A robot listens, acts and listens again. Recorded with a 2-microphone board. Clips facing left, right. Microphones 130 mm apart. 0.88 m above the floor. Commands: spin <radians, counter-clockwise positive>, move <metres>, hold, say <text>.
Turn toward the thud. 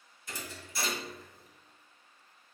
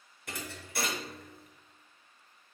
spin -1.05
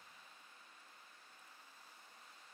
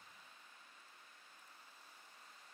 hold
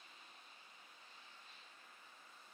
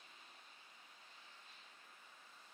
say I heard a thud, but can't make it out now. It was about straight ahead or 60° right.